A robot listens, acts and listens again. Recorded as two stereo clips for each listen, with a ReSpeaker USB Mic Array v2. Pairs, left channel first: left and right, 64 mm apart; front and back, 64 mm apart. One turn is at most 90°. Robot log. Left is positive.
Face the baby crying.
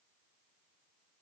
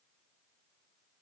cmd idle
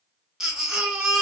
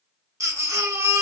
note: The baby crying: 170° right.
cmd yaw -90
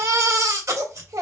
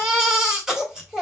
note: The baby crying is now 95° right.
cmd yaw -90
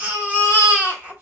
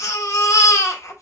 note: The baby crying is now 25° right.
cmd yaw -25
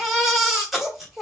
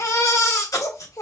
end: Found it: a baby crying, straight ahead.